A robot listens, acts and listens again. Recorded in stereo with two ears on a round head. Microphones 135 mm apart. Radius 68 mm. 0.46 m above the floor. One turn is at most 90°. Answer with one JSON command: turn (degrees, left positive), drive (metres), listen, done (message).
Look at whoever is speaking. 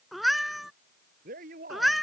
{"turn": -60}
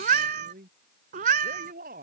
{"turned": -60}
{"turn": -60}
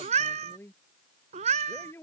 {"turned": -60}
{"turn": 15}
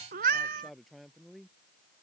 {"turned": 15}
{"done": "Facing the man speaking."}